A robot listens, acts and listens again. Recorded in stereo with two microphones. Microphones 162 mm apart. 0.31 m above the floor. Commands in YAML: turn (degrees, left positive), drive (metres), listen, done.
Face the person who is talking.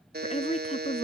turn: 45
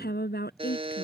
turn: 90
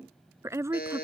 turn: -15
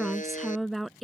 done: "Facing the woman speaking."